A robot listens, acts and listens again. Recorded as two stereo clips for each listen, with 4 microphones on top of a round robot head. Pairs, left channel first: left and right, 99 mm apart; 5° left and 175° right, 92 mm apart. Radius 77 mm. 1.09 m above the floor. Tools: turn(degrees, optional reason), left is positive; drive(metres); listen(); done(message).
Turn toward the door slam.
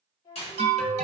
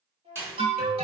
turn(degrees=125, reason="The door slam: 125° left.")
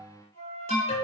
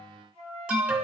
done("I heard a door slam from this way, but can't make it out now.")